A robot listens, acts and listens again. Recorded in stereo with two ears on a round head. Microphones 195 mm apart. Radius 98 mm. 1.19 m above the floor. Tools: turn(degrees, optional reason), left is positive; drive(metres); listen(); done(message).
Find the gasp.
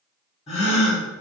turn(degrees=30, reason="The gasp: about 30° left or 150° left.")
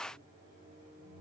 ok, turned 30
listen()
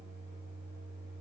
done("I heard a gasp, but can't make it out now. It was about straight ahead or 120° left.")